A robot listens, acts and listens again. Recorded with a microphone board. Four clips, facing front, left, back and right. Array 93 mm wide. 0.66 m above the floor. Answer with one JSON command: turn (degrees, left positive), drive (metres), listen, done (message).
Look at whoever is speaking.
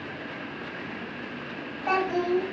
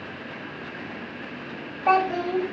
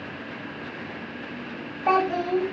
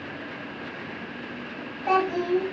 {"turn": 130}
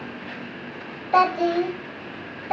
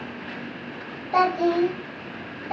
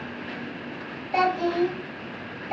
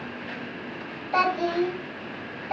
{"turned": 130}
{"done": "Facing the child speaking."}